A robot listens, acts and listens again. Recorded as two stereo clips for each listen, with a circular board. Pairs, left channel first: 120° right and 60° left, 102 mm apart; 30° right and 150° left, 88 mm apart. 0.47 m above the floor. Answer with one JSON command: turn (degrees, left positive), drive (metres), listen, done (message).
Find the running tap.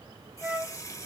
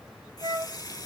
{"turn": -65}
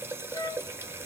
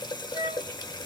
{"done": "Facing the running tap."}